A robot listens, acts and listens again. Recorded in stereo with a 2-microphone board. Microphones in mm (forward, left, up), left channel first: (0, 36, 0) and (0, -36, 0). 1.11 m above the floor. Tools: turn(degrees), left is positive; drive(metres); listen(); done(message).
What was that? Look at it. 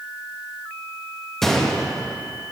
turn(degrees=30)
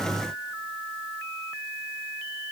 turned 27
listen()
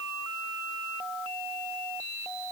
done("I heard a gunshot, but can't make it out now. It was about 25° right or 150° left.")